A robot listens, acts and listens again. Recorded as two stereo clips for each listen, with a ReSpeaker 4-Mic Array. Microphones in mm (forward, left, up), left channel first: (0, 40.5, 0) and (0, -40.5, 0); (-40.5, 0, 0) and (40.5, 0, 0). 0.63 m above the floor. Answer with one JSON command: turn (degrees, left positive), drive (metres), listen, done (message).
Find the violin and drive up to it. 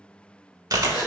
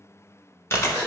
{"listen": true}
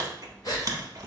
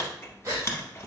{"listen": true}
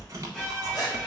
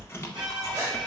{"turn": 15}
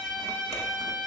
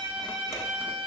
{"turn": 10}
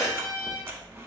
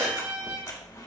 {"drive": 1.0}
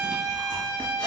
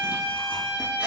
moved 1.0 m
{"turn": -10}
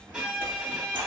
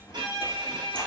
{"drive": 1.0}
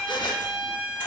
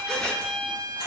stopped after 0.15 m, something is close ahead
{"done": "I am next to the violin."}